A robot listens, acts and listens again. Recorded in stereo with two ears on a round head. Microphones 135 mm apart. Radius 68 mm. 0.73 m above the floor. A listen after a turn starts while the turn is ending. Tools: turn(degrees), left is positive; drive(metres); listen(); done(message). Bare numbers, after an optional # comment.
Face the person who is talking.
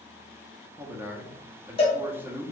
turn(-30)
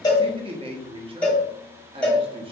# So it is at 135° right.
turn(-135)
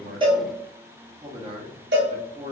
# The man speaking is now 40° right.
turn(-40)
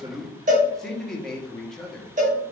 done("Found it: a man speaking, straight ahead, under 1 m away.")